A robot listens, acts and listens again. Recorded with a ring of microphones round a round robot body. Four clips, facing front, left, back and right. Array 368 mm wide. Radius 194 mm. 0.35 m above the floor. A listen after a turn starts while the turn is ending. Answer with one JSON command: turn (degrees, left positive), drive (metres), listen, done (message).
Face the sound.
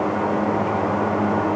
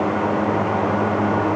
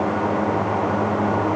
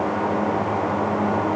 {"listen": true}
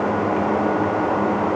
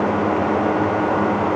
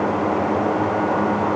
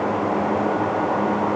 {"listen": true}
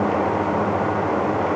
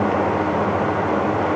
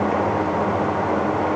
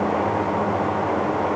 {"done": "I can't make out anything to turn to."}